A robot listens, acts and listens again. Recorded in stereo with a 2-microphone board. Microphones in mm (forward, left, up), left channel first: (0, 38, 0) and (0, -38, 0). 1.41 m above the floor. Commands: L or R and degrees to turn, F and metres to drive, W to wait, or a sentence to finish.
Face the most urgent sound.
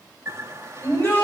L25
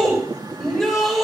Facing the shout.